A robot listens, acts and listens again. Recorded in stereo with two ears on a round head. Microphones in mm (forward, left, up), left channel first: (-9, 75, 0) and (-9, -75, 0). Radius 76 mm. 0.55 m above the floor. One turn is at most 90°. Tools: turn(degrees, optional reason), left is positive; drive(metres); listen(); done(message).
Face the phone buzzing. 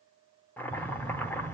turn(degrees=-45, reason="The phone buzzing: about 45° right or 135° right.")
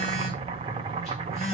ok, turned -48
done("Facing the phone buzzing, over 4 m away.")